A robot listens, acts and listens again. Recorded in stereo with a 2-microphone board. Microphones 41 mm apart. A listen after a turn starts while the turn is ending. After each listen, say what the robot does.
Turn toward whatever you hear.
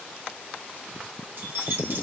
Turn 65° right.
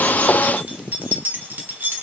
Turn 60° right.
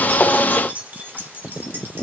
Turn 60° right.
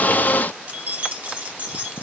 Turn 50° right.
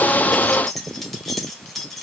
Found it: keys jangling, straight ahead, 1 to 2 m away.